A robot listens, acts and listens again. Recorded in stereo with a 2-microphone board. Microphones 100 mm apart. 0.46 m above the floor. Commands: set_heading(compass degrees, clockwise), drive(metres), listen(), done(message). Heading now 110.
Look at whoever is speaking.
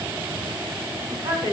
set_heading(165)
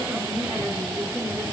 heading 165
done("Facing the woman speaking, over 4 m away.")